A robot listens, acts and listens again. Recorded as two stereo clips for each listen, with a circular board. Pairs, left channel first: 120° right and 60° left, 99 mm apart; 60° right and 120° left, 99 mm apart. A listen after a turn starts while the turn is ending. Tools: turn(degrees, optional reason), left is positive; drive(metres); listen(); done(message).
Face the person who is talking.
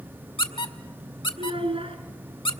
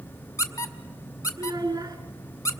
turn(degrees=70, reason="The child speaking: 70° left.")
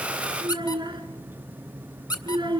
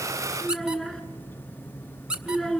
turn(degrees=20, reason="The child speaking is now 20° left.")
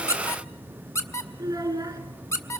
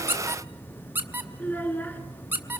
done("Facing the child speaking.")